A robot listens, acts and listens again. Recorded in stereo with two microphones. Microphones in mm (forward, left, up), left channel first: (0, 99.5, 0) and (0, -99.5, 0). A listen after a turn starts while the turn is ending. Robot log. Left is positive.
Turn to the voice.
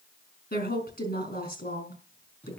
note: The woman speaking: about 55° left or 125° left.
cmd yaw +55
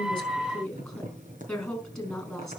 end: Facing the woman speaking.